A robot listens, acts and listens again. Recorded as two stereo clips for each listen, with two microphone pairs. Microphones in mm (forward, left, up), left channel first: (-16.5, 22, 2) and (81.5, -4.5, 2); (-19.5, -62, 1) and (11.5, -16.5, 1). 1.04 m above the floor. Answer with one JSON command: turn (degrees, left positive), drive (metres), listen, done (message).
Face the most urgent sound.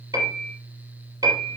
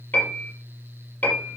{"listen": true}
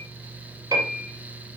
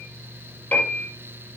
{"listen": true}
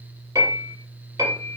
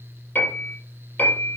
{"done": "I can't make out anything urgent to turn to."}